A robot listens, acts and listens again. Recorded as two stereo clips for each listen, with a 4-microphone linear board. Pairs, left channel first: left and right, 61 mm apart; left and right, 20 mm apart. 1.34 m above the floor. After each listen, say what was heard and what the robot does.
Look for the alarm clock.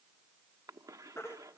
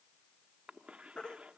Keep listening.
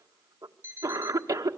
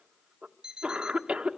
The alarm clock: about 40° right or 140° right. Turn 40° right.
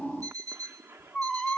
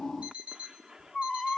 So it is at 100° right. Turn 100° right.
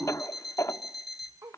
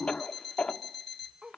Facing the alarm clock.